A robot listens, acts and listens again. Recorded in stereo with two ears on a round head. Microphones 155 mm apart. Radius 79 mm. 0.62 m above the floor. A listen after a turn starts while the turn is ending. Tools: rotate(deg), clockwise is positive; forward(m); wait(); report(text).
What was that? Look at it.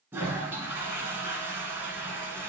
rotate(30)
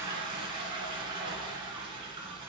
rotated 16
rotate(150)
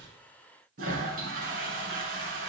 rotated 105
rotate(50)
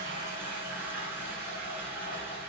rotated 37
rotate(10)
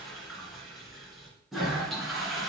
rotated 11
report("Facing the toilet flushing.")